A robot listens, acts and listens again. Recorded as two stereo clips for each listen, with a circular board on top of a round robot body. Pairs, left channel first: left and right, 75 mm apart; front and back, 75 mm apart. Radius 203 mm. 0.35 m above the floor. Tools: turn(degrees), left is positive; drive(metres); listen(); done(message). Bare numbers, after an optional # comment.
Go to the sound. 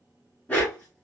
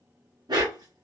# The dog barking: 160° left.
turn(160)
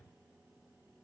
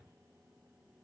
listen()
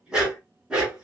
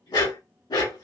# The dog barking is now 15° right.
turn(-15)
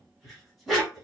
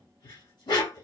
drive(1.0)
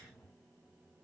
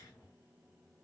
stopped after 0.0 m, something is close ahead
listen()
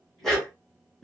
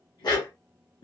done("Blocked. The dog barking is further on, straight ahead.")